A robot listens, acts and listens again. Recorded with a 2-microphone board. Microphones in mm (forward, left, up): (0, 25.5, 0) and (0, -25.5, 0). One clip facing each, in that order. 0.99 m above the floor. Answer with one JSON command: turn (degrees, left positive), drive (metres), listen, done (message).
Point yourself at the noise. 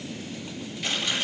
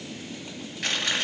{"turn": -55}
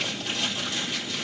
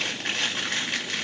{"turn": -65}
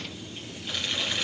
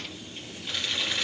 {"done": "Found it: chewing, straight ahead, 2 to 4 m away."}